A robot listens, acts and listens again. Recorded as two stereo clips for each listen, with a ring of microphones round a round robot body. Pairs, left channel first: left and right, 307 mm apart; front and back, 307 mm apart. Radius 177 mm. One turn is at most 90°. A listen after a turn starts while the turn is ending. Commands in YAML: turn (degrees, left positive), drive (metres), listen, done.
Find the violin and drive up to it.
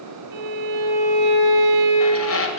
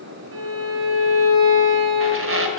turn: -90
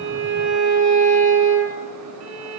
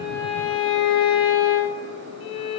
turn: -55
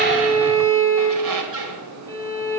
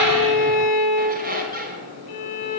turn: -20
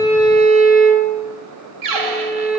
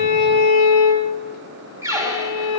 drive: 1.0
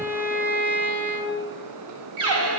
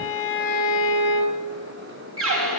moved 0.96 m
drive: 1.0
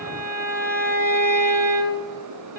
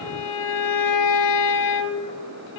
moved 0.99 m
turn: -10
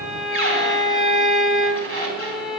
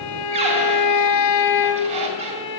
drive: 1.0
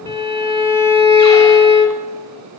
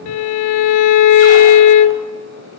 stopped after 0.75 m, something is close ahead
turn: 10
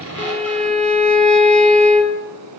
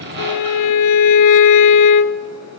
done: "I am next to the violin."